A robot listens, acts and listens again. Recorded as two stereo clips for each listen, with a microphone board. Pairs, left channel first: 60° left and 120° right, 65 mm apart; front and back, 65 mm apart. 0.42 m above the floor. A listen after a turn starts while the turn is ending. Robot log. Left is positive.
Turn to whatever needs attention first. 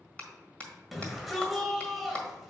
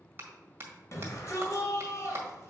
note: The shout: 30° right.
cmd yaw -30
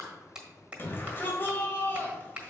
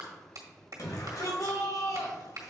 note: The shout is now 10° left.
cmd yaw +10
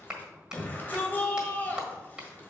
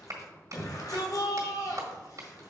end: Found it: a shout, straight ahead.